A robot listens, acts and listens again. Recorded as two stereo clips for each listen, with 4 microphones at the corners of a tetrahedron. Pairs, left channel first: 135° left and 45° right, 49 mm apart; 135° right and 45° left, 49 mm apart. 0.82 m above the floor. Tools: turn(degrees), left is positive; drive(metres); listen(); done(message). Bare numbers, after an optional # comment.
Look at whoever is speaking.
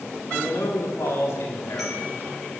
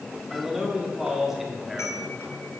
# The man speaking: 130° left.
turn(130)
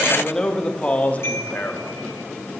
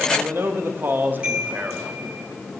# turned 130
# The man speaking is now 95° left.
turn(95)
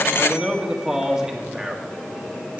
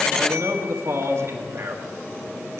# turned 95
# The man speaking is now 30° left.
turn(30)
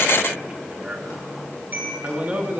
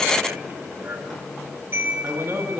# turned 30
# The man speaking is now 10° left.
turn(10)
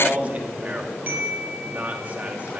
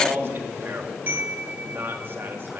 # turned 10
done("Facing the man speaking.")